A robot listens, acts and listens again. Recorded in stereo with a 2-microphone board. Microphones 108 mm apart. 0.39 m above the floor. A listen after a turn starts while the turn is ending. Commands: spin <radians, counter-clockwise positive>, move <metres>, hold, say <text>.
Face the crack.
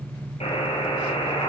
hold
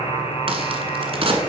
spin -0.96
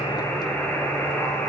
hold
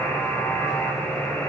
say I heard a crack, but can't make it out now. It was about straight ahead or 70° right.